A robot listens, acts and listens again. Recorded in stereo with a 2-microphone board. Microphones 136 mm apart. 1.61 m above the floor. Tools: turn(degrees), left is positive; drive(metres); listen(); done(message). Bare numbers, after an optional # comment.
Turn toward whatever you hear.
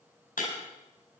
# The breaking glass: about 75° left or 105° left.
turn(75)
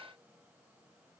listen()
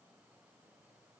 done("I heard breaking glass, but can't make it out now. It was about straight ahead or 30° left.")